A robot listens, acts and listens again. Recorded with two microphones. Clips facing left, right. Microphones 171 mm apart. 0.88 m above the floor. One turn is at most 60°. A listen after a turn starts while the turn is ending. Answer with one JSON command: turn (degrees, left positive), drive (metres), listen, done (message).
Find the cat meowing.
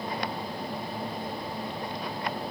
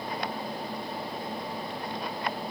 {"listen": true}
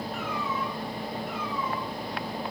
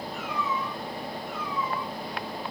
{"turn": 55}
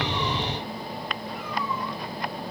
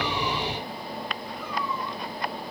{"listen": true}
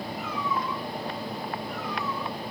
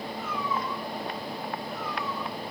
{"turn": 60}
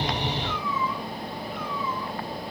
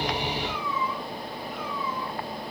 {"turn": 25}
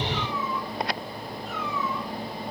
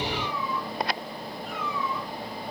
{"turn": 20}
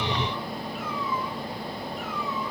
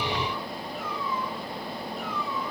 {"listen": true}
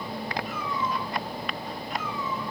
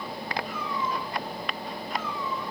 {"done": "Found it: a cat meowing, straight ahead."}